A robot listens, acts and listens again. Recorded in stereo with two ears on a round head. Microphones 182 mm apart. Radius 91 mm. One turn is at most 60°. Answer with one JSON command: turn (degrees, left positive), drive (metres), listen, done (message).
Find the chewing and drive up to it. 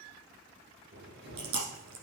{"turn": -60}
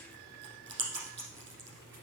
{"turn": -30}
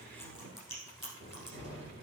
{"drive": 1.0}
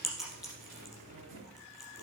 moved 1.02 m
{"drive": 1.0}
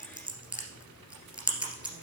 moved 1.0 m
{"drive": 1.0}
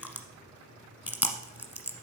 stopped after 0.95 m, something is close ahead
{"turn": -10}
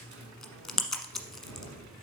{"done": "Arrived at the chewing, straight ahead."}